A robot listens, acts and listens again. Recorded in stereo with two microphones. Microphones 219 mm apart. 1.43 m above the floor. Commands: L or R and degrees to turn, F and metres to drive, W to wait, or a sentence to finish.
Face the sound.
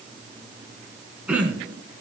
R30
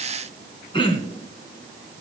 L25
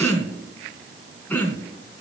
L10
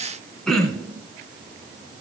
Facing the throat clearing, 2 to 4 m away.